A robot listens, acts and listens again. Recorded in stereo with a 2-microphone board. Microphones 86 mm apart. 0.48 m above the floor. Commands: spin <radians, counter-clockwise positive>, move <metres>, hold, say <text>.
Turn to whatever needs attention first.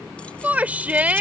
spin -0.35
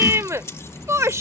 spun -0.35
spin -2.44
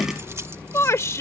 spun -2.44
spin 0.70
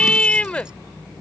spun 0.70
spin 0.26
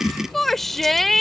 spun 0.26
say Facing the shout.